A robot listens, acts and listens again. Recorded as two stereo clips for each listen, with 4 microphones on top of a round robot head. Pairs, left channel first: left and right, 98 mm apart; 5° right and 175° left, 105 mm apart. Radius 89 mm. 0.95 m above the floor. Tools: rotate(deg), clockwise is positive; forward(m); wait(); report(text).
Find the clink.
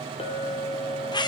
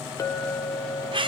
rotate(-55)
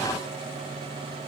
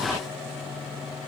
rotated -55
wait()
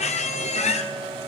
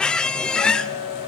report("Found it: a clink, straight ahead.")